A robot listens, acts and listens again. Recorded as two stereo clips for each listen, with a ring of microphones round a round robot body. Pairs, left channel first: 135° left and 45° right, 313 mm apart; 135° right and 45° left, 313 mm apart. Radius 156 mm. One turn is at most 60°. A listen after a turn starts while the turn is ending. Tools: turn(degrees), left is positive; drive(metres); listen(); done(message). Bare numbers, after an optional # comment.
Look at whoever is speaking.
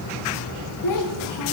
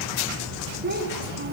# The child speaking: 105° left.
turn(60)
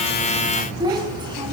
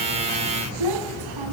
# The child speaking is now 30° left.
turn(30)
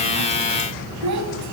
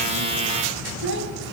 # The child speaking is now 10° right.
turn(-10)
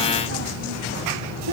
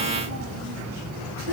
listen()
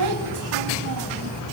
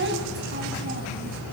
# The child speaking is now 10° right.
turn(-10)
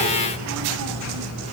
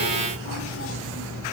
listen()
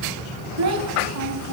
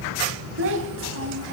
done("Found it: a child speaking, straight ahead, 2 to 4 m away.")